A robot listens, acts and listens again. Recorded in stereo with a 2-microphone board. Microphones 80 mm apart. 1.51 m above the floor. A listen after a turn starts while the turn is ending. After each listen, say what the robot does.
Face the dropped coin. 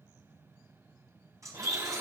Turn 45° right.
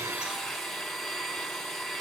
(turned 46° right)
Keep listening.
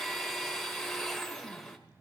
I heard a dropped coin, but can't make it out now. It was about 5° left or 90° right.